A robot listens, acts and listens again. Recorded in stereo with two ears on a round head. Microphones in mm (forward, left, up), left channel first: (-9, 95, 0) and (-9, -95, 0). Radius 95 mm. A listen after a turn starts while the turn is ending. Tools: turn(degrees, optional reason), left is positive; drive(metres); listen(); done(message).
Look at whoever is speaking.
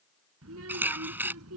turn(degrees=-90)
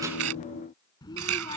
turn(degrees=20, reason="So it is at 20° left.")
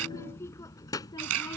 turn(degrees=20, reason="The child speaking is now 20° left.")
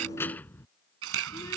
turn(degrees=15, reason="The child speaking is now 15° left.")
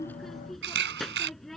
done("Facing the child speaking.")